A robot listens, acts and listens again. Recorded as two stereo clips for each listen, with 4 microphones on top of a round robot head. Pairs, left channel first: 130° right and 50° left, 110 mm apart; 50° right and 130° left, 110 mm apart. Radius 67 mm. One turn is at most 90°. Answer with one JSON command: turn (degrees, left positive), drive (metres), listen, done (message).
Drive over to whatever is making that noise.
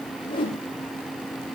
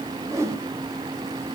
{"turn": -90}
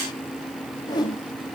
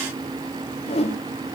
{"turn": -80}
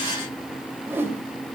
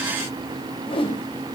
{"turn": -20}
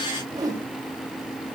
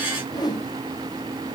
{"drive": 1.0}
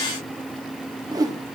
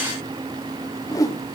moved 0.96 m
{"drive": 1.0}
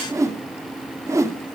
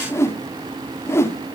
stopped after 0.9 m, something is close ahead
{"done": "I am next to the whoosh."}